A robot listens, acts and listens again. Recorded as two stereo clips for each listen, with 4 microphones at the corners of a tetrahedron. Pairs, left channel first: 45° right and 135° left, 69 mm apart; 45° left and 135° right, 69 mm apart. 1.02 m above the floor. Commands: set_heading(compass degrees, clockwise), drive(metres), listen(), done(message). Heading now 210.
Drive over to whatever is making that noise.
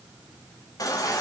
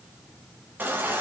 set_heading(285)
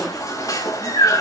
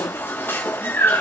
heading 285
set_heading(295)
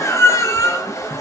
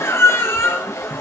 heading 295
drive(1.0)
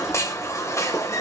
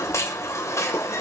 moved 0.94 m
drive(1.0)
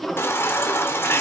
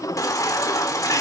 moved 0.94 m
set_heading(285)
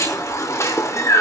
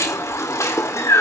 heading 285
drive(1.0)
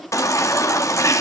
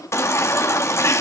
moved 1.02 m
drive(1.0)
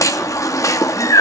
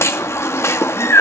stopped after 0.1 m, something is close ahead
done("I am next to the baby crying.")